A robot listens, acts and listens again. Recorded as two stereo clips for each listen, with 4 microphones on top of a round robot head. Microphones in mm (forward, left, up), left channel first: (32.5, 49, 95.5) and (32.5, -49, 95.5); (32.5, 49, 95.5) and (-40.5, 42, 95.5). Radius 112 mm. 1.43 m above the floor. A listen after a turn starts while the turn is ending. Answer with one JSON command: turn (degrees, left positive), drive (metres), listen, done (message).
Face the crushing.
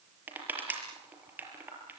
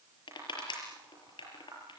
{"turn": -15}
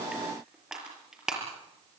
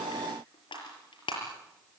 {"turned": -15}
{"done": "Facing the crushing."}